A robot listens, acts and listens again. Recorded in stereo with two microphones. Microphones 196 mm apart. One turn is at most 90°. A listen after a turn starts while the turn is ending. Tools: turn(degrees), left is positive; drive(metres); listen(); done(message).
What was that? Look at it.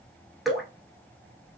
turn(degrees=30)
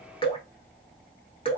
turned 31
turn(degrees=90)
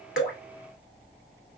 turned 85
turn(degrees=65)
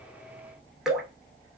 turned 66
done("Found it: dripping, straight ahead, under 1 m away.")